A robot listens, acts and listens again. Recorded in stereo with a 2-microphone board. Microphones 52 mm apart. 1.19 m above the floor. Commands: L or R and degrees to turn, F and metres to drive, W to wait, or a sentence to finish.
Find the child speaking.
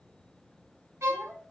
R30
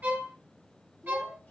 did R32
L40
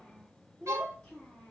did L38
L25
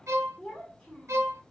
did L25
L15
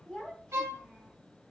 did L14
L10
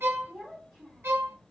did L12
Facing the child speaking, 1 to 2 m away.